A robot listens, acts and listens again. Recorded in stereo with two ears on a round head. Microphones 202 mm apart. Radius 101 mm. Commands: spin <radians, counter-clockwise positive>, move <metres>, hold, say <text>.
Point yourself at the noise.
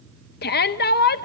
spin 0.79
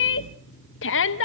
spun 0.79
spin 1.31
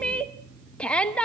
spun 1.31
say Found it: a shout, straight ahead, under 1 m away.